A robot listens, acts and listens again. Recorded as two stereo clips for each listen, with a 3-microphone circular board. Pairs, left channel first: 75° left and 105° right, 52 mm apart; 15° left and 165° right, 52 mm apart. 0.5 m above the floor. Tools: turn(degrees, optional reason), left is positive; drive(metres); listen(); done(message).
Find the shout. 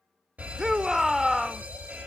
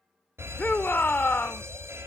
turn(degrees=-25, reason="The shout: 25° right.")
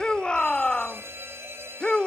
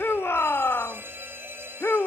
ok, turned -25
turn(degrees=10, reason="The shout is now 10° left.")
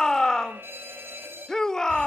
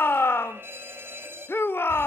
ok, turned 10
done("Facing the shout.")